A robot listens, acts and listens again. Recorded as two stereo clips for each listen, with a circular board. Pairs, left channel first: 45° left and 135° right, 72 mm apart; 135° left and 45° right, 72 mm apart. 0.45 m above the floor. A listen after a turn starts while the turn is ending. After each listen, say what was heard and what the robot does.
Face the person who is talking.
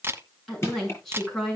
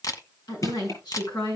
The woman speaking: 130° left. Turn 130° left.
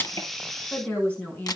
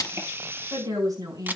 The woman speaking is now 20° right. Turn 20° right.
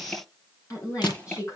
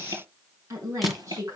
Facing the woman speaking.